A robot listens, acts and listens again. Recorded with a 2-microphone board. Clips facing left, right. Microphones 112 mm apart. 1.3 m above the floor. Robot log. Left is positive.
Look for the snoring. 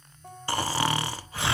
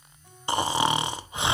note: The snoring: about 20° right or 160° right.
cmd yaw -20
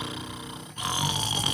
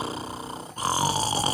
note: So it is at 140° right.
cmd yaw -140
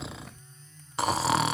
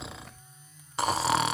end: Facing the snoring.